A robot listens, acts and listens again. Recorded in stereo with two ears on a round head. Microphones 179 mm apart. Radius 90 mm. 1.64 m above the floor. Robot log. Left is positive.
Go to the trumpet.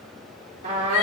note: The trumpet: about 35° right or 145° right.
cmd yaw -35
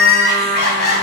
note: So it is at 110° right.
cmd yaw -110
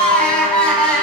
cmd idle
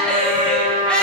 note: The trumpet is now 40° right.
cmd yaw -40
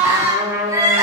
note: The trumpet is now 15° right.
cmd yaw -15
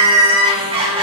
cmd idle
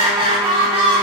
cmd idle
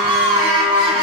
end: I heard a trumpet from this way, but can't make it out now. I did not reach it.